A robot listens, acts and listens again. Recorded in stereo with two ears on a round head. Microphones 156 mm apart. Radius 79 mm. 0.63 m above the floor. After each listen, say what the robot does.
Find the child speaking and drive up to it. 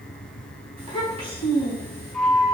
Turn 35° right.
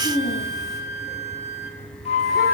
Drive 1.0 m forward.
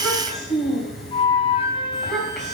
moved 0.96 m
Drive 1.0 m forward.
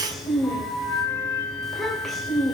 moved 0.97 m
Drive 1.0 m forward.
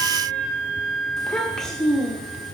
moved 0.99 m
Drive 1.0 m forward.
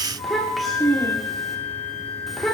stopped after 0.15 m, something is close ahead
I am next to the child speaking.